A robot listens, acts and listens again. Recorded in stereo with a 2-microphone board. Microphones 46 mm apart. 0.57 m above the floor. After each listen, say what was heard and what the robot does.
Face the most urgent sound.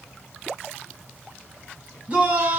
The shout: about 30° right or 150° right. Turn 30° right.
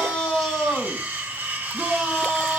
Facing the shout, over 4 m away.